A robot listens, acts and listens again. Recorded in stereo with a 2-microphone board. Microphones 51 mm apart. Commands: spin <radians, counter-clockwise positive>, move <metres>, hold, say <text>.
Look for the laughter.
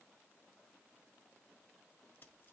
hold
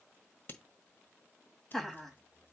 spin 0.52
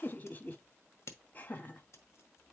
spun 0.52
spin 2.53
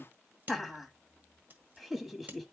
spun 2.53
say Found it: laughter, straight ahead, 1 to 2 m away.